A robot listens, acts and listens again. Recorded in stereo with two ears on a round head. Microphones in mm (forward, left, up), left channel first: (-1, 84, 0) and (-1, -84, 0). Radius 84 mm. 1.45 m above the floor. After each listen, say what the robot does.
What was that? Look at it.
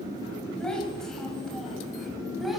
Turn 30° left.
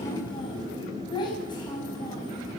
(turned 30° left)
Turn 155° left.
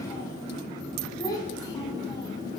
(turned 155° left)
Turn 20° left.
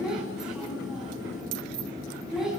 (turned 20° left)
Facing the child speaking, over 4 m away.